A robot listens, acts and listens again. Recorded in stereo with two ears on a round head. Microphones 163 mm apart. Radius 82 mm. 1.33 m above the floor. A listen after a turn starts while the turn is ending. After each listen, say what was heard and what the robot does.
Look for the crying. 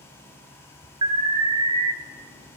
Keep listening.
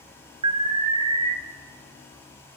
Keep listening.
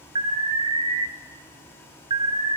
I can't make out crying to turn to.